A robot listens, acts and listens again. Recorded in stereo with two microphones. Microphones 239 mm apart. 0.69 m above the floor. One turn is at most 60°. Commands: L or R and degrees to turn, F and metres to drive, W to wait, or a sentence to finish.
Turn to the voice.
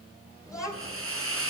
R30
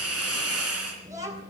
R60
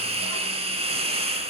R60
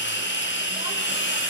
R30
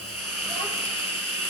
Facing where the child speaking came from. I can't hear it now.